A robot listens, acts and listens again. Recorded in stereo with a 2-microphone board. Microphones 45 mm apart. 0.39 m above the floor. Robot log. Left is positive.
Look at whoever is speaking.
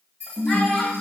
cmd yaw +30
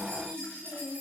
note: So it is at 140° left.
cmd yaw +140
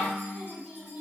note: The child speaking is now 40° left.
cmd yaw +40
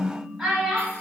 note: The child speaking is now 10° right.
cmd yaw -10
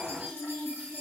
end: Found it: a child speaking, straight ahead, 1 to 2 m away.